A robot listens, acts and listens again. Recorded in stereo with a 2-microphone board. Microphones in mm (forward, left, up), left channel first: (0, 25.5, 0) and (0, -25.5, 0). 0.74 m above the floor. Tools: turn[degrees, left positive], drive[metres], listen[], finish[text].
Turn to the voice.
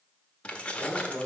Thought: The man speaking: about 55° right or 125° right.
Action: turn[-55]
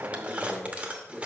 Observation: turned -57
Action: finish[Found it: a man speaking, straight ahead.]